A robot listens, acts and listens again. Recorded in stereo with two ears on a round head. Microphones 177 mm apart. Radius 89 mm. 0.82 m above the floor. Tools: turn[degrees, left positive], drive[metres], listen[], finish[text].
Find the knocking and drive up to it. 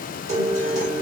Action: listen[]
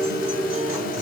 Action: listen[]
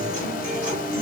Action: finish[I can't make out knocking, only a guitar.]